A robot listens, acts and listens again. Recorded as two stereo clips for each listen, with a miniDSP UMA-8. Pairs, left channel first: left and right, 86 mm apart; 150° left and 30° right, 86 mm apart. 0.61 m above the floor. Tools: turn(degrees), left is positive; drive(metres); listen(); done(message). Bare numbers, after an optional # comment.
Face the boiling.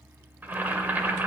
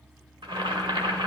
# The boiling: 20° right.
turn(-20)
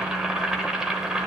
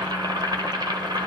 done("Found it: boiling, straight ahead.")